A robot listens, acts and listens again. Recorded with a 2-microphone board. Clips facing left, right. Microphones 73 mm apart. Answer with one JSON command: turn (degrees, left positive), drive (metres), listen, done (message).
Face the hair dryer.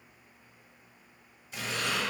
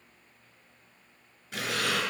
{"listen": true}
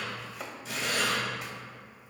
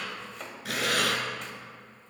{"listen": true}
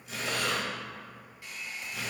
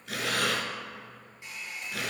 {"turn": -20}
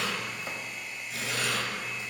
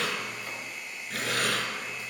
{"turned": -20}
{"done": "Facing the hair dryer."}